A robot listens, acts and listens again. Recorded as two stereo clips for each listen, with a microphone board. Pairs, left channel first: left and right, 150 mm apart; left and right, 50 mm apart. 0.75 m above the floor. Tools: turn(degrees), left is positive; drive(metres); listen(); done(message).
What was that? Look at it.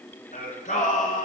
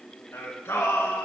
turn(degrees=65)
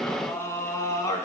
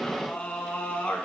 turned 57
turn(degrees=25)
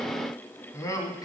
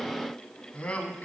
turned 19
turn(degrees=30)
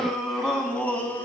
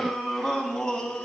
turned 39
turn(degrees=15)
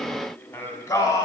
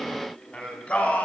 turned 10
turn(degrees=25)
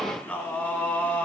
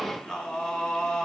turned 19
turn(degrees=10)
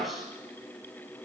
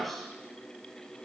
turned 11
done("Facing the singing, 1 to 2 m away.")